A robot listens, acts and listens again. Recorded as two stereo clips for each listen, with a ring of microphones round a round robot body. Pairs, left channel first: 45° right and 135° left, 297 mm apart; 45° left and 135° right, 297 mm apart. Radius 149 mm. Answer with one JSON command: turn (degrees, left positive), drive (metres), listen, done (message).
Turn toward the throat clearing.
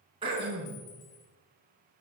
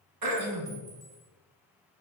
{"turn": -150}
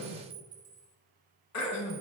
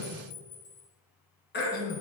{"turn": -10}
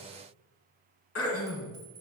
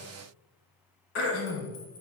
{"done": "Facing the throat clearing."}